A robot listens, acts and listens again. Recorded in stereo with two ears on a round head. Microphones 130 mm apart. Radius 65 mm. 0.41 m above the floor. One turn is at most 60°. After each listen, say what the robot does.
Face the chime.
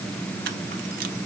Keep listening.
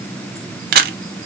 Keep listening.
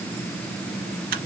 I can't make out a chime to turn to.